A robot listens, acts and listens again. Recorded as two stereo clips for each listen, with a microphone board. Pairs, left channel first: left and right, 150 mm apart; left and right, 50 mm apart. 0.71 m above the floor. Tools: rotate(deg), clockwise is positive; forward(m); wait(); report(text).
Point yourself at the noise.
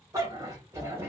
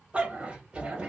rotate(15)
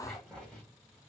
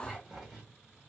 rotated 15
rotate(-30)
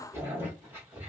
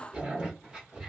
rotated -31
rotate(15)
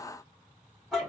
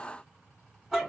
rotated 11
report("Found it: a dog barking, straight ahead.")